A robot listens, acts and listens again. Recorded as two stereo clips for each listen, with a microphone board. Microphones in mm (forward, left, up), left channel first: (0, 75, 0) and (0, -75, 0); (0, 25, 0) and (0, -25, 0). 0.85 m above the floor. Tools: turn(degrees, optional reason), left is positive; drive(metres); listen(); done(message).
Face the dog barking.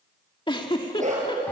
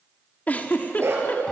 turn(degrees=-50, reason="The dog barking: about 50° right or 130° right.")
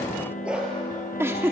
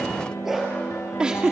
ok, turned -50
done("Found it: a dog barking, straight ahead, over 4 m away.")